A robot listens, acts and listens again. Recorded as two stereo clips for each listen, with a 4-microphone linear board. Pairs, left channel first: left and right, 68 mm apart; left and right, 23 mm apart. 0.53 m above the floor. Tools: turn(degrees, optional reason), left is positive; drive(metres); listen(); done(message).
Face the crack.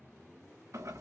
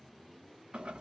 listen()
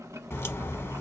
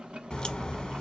turn(degrees=40, reason="The crack: about 40° left or 140° left.")
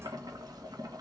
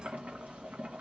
listen()
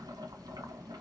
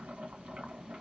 done("I heard a crack, but can't make it out now. It was about straight ahead or 100° left.")